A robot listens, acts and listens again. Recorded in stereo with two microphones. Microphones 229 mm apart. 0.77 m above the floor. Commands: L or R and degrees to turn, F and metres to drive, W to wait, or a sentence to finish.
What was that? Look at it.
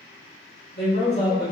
L45
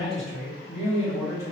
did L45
R15
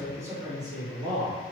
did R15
R25
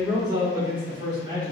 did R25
R25
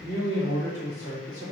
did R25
Found it: a man speaking, straight ahead, 1 to 2 m away.